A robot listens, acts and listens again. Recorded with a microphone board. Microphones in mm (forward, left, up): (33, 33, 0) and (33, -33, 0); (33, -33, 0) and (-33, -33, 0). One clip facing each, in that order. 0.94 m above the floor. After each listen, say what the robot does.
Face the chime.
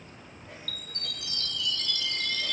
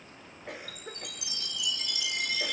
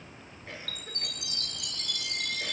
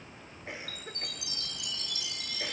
Turn 15° right.
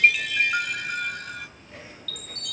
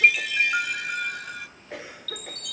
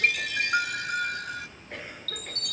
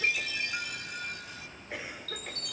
Facing the chime.